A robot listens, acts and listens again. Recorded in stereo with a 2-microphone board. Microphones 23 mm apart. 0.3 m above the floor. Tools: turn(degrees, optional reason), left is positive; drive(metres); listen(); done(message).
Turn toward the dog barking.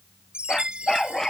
turn(degrees=15, reason="The dog barking: about 15° left or 165° left.")
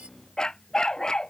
turn(degrees=150, reason="So it is at 150° left.")
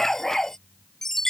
turn(degrees=20, reason="The dog barking is now 20° left.")
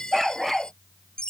done("Facing the dog barking.")